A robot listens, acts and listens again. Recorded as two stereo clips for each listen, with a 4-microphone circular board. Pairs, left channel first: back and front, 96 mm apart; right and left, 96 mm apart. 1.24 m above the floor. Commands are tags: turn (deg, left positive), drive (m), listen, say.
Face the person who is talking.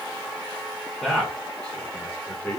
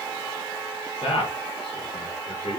<turn deg="-105"/>
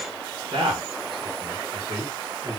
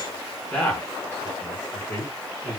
<turn deg="-40"/>
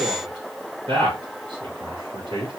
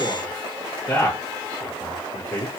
<turn deg="-10"/>
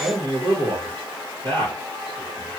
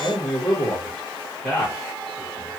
<say>Facing the man speaking, 2 to 4 m away.</say>